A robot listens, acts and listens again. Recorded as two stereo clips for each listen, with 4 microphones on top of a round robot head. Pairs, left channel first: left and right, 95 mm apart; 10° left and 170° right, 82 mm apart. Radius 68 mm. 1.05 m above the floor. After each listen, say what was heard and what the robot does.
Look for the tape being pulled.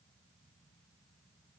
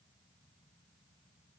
Keep listening.
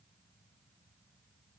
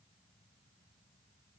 Keep listening.
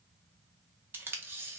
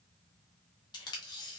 The tape being pulled: 25° right. Turn 25° right.
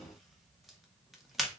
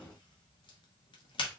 Found it: tape being pulled, straight ahead.